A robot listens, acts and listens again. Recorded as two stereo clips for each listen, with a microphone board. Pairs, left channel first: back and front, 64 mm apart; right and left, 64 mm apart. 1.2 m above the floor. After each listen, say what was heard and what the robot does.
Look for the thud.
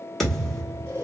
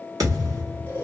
The thud: 95° left. Turn 95° left.
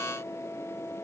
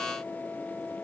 Facing where the thud came from. I can't hear it now.